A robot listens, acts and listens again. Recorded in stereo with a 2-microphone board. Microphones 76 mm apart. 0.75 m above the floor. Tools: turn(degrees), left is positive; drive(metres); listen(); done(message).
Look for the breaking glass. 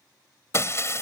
turn(degrees=40)
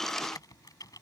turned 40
listen()
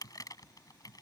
done("I heard breaking glass, but can't make it out now. It was about straight ahead or 100° left.")